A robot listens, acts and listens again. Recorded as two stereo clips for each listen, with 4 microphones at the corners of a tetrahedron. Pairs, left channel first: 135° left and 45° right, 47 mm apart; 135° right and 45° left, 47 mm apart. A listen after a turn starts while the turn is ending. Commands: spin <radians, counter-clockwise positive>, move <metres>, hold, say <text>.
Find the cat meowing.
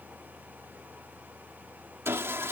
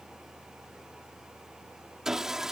hold
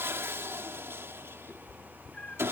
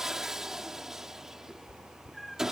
spin 2.36
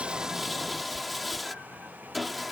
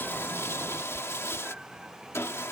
hold
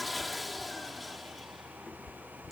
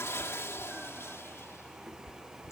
spin 2.01
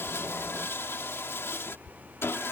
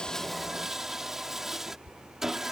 spin 0.26
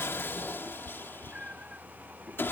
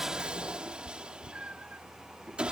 say Found it: a cat meowing, straight ahead.